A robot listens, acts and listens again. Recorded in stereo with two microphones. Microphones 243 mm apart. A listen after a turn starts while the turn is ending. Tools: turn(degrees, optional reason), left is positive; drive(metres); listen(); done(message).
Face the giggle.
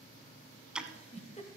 turn(degrees=25, reason="The giggle: about 25° left or 155° left.")
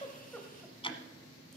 listen()
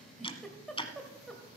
done("Facing the giggle, 1 to 2 m away.")